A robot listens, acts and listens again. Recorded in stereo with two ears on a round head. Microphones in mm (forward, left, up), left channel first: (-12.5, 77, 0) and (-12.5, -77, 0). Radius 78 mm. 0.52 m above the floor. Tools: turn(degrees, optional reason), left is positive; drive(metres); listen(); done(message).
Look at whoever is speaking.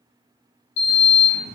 listen()
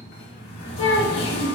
turn(degrees=70, reason="The child speaking: about 70° left or 110° left.")
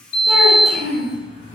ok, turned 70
done("Found it: a child speaking, straight ahead.")